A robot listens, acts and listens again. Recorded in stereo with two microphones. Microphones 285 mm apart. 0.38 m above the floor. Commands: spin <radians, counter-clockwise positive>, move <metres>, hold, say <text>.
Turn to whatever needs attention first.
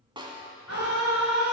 spin 1.05
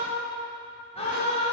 spin 0.44
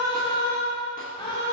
spin 0.35
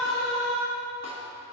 say Facing the scream.